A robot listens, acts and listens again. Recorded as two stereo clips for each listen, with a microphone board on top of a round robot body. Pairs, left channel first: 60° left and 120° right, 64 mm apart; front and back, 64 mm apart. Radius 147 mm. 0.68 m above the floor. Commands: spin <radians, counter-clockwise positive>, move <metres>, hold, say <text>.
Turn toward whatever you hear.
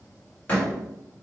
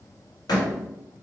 spin -0.17
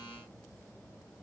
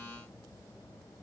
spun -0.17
say I heard a door slam from this way, but can't make it out now.